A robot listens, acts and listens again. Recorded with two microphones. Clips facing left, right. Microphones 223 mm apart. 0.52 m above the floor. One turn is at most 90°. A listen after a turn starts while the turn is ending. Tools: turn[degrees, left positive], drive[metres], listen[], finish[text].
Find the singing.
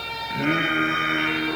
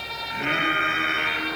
Thought: The singing: about 50° left or 130° left.
Action: turn[50]
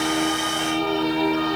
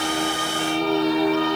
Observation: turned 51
Action: finish[Facing the singing, over 4 m away.]